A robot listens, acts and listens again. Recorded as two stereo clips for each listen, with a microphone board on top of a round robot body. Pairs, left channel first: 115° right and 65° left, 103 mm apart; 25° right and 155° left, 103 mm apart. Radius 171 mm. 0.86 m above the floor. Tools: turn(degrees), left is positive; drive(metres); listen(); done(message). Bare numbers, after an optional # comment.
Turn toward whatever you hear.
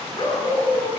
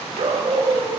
# The dog barking: 165° right.
turn(-165)
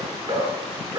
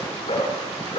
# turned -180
# The dog barking is now 10° left.
turn(10)
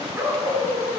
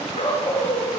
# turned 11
done("Found it: a dog barking, straight ahead.")